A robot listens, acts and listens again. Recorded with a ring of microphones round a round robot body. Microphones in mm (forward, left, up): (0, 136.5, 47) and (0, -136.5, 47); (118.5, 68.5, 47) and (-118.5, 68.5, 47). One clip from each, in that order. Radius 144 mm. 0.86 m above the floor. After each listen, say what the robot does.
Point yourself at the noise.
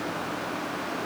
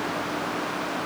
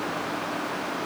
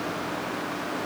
Keep listening.
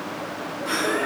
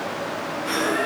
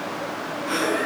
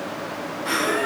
Turn 180° left.
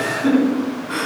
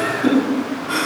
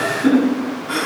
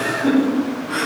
Turn 35° right.
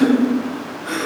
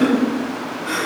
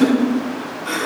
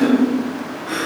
Found it: laughter, straight ahead.